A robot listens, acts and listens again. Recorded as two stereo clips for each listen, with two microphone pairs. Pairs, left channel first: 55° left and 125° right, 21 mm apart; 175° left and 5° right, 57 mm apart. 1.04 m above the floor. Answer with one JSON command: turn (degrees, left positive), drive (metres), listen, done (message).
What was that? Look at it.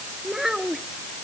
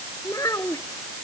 {"turn": 165}
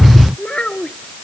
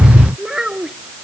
{"turn": 70}
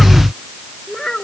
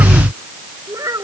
{"done": "Found it: a child speaking, straight ahead."}